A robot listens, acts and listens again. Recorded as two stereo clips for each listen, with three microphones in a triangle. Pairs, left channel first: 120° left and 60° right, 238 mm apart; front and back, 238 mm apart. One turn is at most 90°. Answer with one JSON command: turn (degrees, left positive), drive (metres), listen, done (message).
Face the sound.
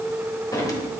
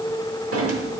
{"turn": -90}
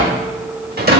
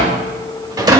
{"turn": -90}
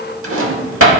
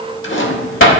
{"turn": -35}
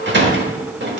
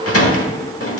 {"turn": -20}
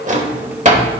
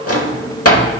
{"done": "Found it: a drawer, straight ahead."}